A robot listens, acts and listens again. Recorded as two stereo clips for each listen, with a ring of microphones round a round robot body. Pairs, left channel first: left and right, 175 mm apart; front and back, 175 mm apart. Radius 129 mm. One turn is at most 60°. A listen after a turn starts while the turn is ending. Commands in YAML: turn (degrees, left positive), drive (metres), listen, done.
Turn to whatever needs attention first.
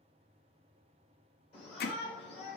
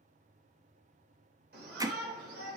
turn: 60
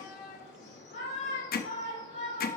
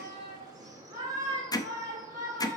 turn: 60
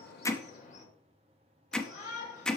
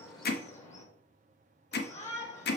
turn: 45
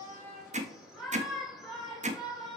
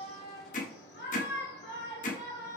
done: "Found it: a shout, straight ahead, 2 to 4 m away."